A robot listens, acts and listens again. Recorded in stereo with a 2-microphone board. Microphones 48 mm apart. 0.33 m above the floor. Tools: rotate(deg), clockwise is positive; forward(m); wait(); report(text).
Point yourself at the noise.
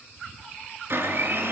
rotate(60)
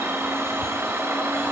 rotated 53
rotate(65)
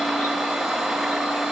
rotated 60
report("Found it: a blender, straight ahead.")